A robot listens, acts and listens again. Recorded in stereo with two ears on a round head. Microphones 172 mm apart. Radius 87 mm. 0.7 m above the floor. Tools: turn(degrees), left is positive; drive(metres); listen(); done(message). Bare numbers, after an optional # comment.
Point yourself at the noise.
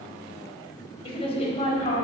# The woman speaking: about 40° left or 140° left.
turn(40)
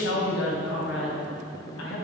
# So it is at 100° left.
turn(100)
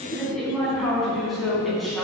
done("Facing the woman speaking.")